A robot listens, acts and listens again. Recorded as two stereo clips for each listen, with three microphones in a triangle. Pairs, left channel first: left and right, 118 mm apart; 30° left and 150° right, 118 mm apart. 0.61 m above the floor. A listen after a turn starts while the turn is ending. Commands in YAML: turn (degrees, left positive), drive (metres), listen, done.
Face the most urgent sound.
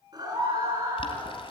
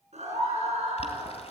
turn: -145
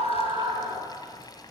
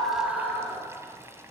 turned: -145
turn: -55
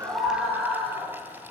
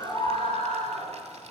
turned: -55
done: "Facing the scream, over 4 m away."